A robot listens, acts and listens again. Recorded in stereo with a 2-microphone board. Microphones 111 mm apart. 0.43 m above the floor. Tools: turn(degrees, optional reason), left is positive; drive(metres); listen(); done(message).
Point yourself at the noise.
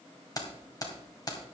turn(degrees=35, reason="The keys jangling: about 35° left or 145° left.")
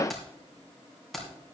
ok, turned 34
done("Found it: keys jangling, straight ahead.")